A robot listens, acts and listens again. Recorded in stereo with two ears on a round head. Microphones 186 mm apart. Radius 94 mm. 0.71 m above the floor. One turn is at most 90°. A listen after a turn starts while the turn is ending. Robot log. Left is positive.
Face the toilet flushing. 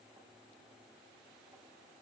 cmd idle
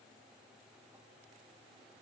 cmd idle
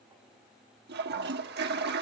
note: The toilet flushing: about 50° right or 130° right.
cmd yaw -50
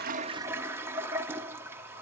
note: So it is at 15° right.
cmd yaw -15
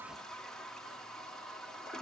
end: Facing the toilet flushing, 1 to 2 m away.